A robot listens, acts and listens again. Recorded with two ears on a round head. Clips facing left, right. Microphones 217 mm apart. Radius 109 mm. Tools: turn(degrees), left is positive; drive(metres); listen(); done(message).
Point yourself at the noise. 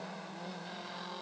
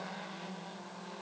listen()
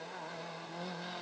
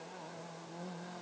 listen()
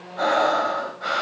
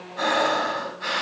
turn(degrees=-30)
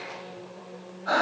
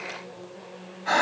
turn(degrees=-140)
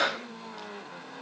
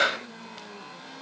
turn(degrees=-45)
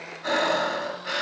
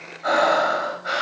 done("Facing the breathing, over 4 m away.")